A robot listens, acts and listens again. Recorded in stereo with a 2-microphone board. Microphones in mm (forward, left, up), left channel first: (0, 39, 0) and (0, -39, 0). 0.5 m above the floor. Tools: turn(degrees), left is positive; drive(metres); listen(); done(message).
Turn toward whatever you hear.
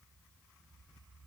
listen()
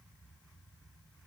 listen()
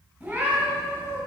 turn(degrees=-30)
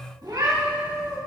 turn(degrees=-115)
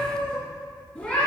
turn(degrees=20)
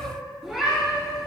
done("Found it: a cat meowing, straight ahead, over 4 m away.")